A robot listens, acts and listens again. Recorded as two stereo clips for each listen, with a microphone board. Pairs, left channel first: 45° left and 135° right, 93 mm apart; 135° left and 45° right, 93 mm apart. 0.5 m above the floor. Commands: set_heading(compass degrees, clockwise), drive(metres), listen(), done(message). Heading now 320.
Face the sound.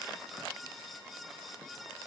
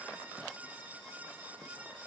listen()
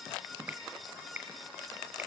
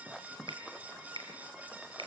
set_heading(25)
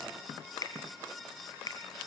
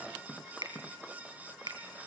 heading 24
done("Facing the finger snap.")